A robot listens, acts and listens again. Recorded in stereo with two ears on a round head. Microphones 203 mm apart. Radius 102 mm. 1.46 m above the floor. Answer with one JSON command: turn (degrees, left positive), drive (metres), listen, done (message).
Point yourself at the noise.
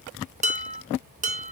{"turn": -30}
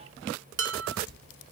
{"turn": -110}
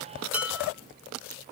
{"done": "Found it: dishes clattering, straight ahead."}